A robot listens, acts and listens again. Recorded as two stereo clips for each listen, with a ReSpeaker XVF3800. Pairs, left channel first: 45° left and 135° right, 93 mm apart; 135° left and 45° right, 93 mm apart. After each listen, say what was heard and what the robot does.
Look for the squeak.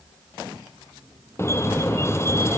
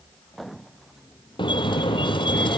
The squeak: 105° left. Turn 105° left.
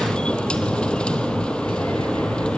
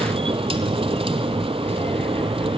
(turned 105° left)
The squeak is now 35° right. Turn 35° right.
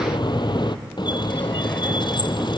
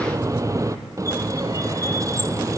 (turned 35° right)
The squeak is now 10° left. Turn 10° left.
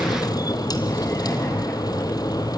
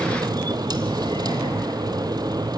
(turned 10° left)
Found it: a squeak, straight ahead, 1 to 2 m away.